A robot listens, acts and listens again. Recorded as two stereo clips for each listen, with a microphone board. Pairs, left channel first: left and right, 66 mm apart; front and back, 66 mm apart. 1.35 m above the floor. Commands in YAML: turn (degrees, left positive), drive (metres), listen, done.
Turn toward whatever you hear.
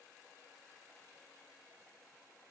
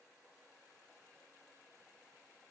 listen: true
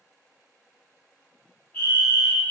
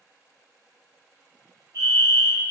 turn: 155
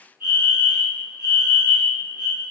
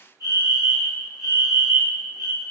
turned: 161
turn: -10
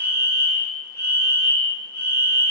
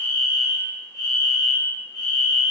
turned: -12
done: "Found it: a fire alarm, straight ahead, 1 to 2 m away."